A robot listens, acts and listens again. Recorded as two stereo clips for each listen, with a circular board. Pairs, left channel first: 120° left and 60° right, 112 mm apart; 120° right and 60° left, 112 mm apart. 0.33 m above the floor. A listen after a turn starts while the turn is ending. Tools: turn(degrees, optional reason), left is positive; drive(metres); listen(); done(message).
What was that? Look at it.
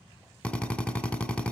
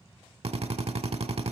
turn(degrees=40, reason="The drill: 40° left.")
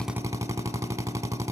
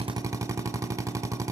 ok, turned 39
done("Found it: a drill, straight ahead.")